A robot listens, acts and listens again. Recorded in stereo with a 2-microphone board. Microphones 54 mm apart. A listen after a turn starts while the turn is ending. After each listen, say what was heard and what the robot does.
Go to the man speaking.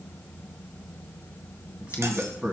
The man speaking: about 25° right or 155° right. Turn 25° right.
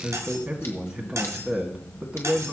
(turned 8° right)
The man speaking: about 20° right or 160° right. Turn 20° right.
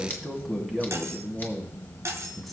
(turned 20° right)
Drive 1.0 m forward.
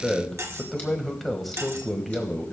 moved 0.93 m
Drive 1.0 m forward.
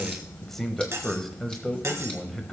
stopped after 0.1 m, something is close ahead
I am next to the man speaking.